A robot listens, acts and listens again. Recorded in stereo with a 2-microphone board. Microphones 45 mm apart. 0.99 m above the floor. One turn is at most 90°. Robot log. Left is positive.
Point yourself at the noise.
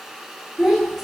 cmd yaw -30
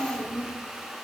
note: So it is at 140° right.
cmd yaw -90
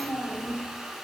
note: The child speaking is now 15° right.
cmd yaw -15
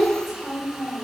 end: Facing the child speaking, 2 to 4 m away.